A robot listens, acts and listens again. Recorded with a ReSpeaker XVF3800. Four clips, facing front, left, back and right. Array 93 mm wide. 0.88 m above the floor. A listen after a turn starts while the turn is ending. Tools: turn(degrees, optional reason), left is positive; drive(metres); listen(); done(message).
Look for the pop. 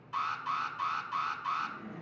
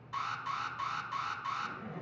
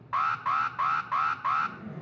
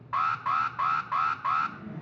listen()
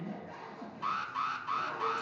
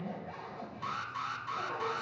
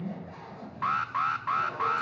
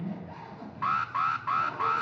listen()
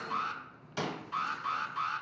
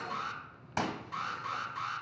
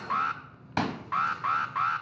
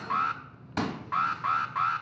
turn(degrees=165, reason="The pop: 165° left.")
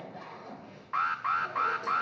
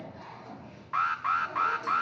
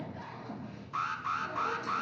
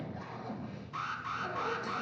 done("I heard a pop from this way, but can't make it out now.")